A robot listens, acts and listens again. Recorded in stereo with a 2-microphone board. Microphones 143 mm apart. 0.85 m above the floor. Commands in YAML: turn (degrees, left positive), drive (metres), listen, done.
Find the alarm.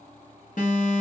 turn: 65
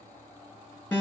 turn: 15
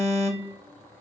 done: "Found it: an alarm, straight ahead, 1 to 2 m away."